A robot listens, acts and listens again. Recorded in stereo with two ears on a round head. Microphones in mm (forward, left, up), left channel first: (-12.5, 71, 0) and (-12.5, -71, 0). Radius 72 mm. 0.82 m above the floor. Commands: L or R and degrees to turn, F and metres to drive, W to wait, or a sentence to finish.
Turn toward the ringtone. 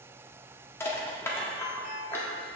L50
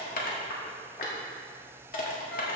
W
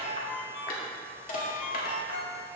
L80
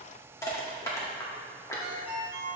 R10
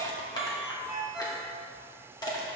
Facing the ringtone, 1 to 2 m away.